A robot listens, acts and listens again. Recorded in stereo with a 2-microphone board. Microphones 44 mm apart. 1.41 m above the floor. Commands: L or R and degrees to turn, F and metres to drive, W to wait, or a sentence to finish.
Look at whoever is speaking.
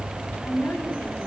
L60
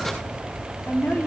L55
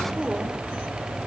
Facing the woman speaking, over 4 m away.